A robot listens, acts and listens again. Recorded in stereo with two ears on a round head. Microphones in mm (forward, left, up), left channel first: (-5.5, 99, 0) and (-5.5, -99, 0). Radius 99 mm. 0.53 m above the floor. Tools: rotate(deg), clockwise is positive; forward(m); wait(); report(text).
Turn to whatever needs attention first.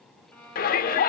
rotate(-45)
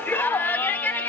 rotate(-10)
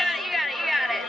report("Facing the shout.")